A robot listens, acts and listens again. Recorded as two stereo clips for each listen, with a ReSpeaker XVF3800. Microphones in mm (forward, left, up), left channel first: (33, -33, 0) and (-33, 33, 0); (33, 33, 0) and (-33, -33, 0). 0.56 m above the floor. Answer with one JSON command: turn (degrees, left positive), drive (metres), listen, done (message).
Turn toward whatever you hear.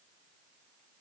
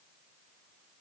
{"listen": true}
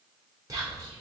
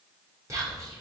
{"turn": 175}
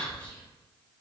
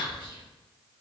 {"turn": 25}
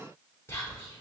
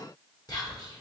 {"turn": 10}
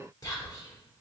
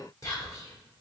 {"done": "Found it: whispering, straight ahead, 1 to 2 m away."}